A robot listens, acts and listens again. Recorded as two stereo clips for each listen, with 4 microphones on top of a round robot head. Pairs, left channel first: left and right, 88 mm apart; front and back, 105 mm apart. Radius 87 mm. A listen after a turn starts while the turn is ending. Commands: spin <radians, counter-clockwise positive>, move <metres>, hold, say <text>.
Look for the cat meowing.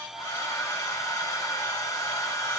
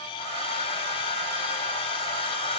hold
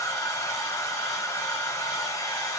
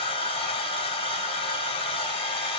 hold
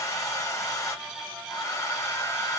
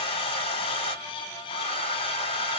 say I can't make out a cat meowing, only a hair dryer.